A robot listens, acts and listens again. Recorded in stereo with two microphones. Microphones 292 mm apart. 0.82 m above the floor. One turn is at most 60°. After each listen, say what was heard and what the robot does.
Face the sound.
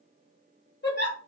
The giggle: about 40° left or 140° left. Turn 40° left.
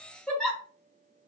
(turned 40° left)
Facing the giggle.